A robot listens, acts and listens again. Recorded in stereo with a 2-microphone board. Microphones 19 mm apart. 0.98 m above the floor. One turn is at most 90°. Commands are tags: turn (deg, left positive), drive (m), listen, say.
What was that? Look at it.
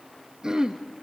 <turn deg="-35"/>
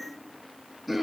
<say>Facing the throat clearing.</say>